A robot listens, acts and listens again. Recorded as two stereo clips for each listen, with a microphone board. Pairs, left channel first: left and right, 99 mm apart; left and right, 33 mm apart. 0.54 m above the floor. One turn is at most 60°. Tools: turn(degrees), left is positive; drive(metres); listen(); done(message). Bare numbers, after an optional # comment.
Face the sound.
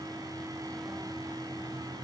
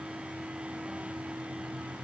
listen()
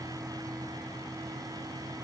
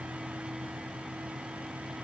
listen()
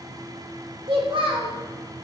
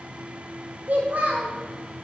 # The child speaking: about 60° right or 120° right.
turn(-60)
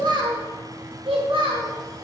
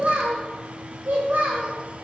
# So it is at 60° right.
turn(-60)
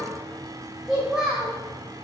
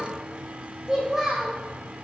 # The child speaking is now 10° right.
turn(-10)
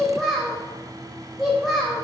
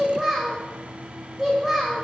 done("Facing the child speaking, 2 to 4 m away.")